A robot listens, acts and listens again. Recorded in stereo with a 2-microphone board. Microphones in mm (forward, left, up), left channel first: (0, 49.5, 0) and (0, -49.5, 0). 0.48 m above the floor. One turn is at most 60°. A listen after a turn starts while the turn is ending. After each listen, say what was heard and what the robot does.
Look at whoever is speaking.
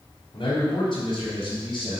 The man speaking: about 55° left or 125° left. Turn 55° left.
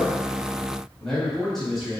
Found it: a man speaking, straight ahead, 2 to 4 m away.